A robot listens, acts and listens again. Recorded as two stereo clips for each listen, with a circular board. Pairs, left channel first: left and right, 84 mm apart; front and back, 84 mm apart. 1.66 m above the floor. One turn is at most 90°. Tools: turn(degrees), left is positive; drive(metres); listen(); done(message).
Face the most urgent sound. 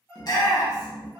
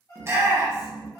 turn(degrees=90)
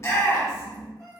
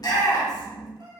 turn(degrees=40)
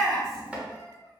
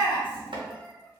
done("Found it: a shout, straight ahead, 1 to 2 m away.")